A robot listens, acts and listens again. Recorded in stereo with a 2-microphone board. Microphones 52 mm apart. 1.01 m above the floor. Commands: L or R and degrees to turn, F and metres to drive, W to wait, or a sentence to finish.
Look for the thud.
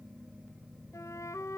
W
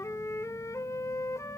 W
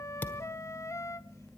L40
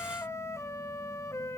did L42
W
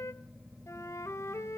I heard a thud, but can't make it out now. It was about 5° right or 100° left.